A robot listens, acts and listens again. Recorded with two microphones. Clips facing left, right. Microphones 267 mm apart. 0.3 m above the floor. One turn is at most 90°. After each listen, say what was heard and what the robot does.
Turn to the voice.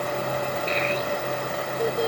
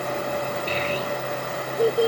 The child speaking: about 35° right or 145° right. Turn 35° right.
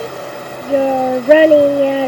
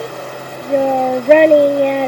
Facing the child speaking.